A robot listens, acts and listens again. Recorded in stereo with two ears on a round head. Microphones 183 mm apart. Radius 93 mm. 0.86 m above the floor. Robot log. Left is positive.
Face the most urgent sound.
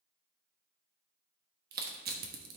cmd idle
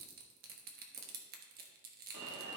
note: The alarm: about 65° right or 115° right.
cmd yaw -65
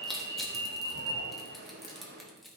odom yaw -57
note: So it is at 55° right.
cmd yaw -55
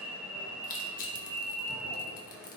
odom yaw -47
end: Found it: an alarm, straight ahead, 1 to 2 m away.